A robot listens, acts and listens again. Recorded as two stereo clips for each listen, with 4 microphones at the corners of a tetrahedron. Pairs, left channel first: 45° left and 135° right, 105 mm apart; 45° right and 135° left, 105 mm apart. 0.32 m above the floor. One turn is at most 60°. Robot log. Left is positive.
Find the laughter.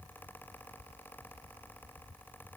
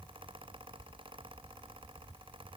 cmd idle
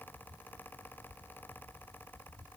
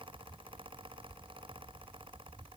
cmd idle
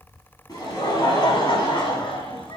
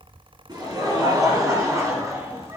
note: The laughter: 75° left.
cmd yaw +60
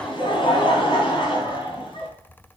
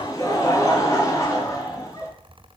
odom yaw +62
note: The laughter is now 15° left.
cmd yaw +15
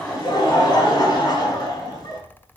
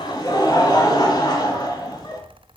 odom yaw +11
end: Found it: laughter, straight ahead, 2 to 4 m away.